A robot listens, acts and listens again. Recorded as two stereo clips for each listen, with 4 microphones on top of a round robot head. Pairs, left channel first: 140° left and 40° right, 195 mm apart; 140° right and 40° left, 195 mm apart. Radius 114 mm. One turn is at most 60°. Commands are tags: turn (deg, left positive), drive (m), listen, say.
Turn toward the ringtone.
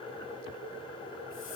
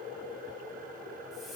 <listen/>
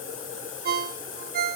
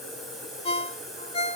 <turn deg="-60"/>
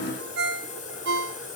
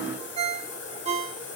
<turn deg="-15"/>
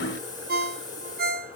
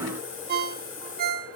<say>Facing the ringtone.</say>